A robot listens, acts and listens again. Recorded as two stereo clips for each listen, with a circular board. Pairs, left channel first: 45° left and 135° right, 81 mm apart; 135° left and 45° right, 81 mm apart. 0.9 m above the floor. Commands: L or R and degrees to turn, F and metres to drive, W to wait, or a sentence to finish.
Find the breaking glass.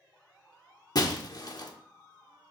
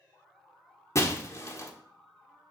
L80
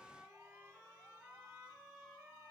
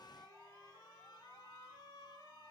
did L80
I heard breaking glass from this way, but can't make it out now.